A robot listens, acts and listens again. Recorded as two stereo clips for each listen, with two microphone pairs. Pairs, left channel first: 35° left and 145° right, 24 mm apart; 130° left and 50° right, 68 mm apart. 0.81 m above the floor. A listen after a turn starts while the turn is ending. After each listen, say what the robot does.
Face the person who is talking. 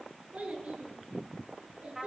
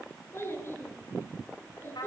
Turn 170° right.
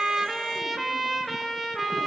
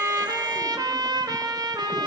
Keep listening.
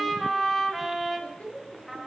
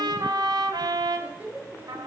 Turn 15° left.
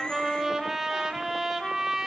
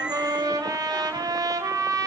Keep listening.
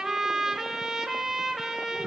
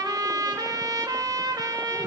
Keep listening.
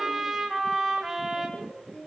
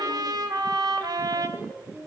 Found it: a child speaking, straight ahead.